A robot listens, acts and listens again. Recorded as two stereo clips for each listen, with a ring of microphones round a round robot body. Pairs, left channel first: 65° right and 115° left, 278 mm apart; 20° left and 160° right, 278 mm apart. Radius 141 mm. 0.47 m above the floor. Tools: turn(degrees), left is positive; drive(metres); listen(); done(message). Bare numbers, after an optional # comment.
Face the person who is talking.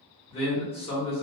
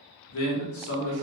done("Found it: a man speaking, straight ahead.")